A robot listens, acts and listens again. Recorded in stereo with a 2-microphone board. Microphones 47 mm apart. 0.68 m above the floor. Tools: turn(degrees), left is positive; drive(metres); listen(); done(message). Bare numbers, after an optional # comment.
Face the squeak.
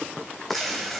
listen()
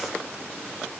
listen()
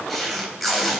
done("I can't make out a squeak, only tape being pulled.")